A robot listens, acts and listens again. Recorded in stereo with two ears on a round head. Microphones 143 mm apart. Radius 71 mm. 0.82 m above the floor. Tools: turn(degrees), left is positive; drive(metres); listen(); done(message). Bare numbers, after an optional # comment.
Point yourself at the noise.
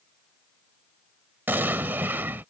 turn(-30)
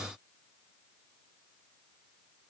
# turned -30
listen()
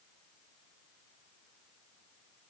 done("I heard an explosion, but can't make it out now. It was about 15° left or 135° right.")